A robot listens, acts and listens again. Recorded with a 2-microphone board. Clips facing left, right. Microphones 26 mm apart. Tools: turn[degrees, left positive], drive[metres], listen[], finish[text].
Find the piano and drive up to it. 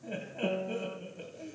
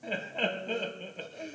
Action: turn[90]
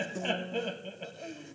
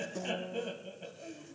Action: drive[1.0]
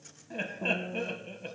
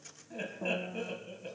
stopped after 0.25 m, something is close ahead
Action: finish[Something is in my way. I am facing the piano but have not reached it.]